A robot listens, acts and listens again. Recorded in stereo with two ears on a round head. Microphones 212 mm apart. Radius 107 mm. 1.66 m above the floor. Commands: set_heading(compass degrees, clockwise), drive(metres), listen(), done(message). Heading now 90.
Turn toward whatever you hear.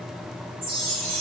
set_heading(180)
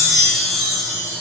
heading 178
done("Facing the chime, 2 to 4 m away.")